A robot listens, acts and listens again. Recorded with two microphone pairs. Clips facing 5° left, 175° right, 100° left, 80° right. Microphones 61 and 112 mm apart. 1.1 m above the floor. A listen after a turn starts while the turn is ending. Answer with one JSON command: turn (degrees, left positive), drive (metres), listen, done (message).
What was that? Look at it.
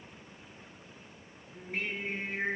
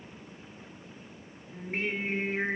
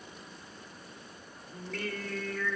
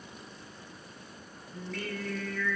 {"turn": 150}
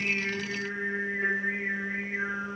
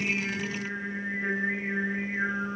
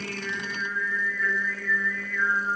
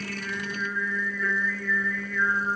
{"done": "Found it: singing, straight ahead, 2 to 4 m away."}